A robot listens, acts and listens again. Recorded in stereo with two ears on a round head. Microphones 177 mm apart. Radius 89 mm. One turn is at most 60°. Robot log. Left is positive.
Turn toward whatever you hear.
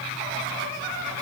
cmd idle
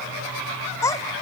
note: The child speaking: about 20° left or 160° left.
cmd yaw +20
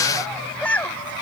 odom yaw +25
cmd yaw +30
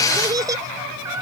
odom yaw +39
note: So it is at 15° right.
cmd yaw -15
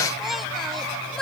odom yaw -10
end: Facing the child speaking.